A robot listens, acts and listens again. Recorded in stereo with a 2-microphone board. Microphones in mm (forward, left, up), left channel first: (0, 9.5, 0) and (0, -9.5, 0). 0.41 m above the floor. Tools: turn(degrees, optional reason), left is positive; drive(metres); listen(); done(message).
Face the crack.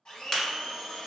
turn(degrees=30, reason="The crack: about 30° left or 150° left.")
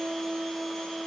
listen()
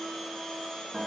done("I heard a crack, but can't make it out now. It was about straight ahead or 120° left.")